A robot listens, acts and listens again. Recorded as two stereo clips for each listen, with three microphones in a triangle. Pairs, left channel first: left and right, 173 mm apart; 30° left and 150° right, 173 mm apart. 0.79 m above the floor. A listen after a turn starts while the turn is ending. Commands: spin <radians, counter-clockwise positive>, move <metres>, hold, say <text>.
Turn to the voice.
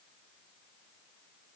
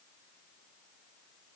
hold
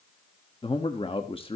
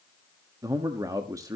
spin 2.53
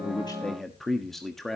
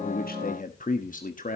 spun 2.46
say Found it: a man speaking, straight ahead, 1 to 2 m away.